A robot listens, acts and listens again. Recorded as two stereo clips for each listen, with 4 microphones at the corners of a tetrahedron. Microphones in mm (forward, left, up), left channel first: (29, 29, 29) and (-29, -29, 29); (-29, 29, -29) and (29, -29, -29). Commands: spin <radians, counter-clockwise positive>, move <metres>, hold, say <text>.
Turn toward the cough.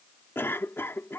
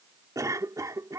spin -0.17
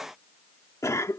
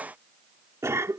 say Facing the cough.